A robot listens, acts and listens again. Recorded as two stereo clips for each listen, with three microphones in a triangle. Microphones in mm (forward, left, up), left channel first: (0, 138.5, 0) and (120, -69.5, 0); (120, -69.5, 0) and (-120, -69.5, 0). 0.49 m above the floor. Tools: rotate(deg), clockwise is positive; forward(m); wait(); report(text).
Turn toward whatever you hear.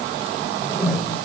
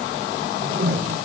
rotate(145)
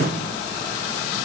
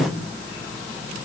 wait()
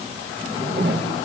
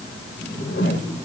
rotate(25)
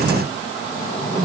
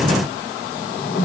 report("Facing the whoosh.")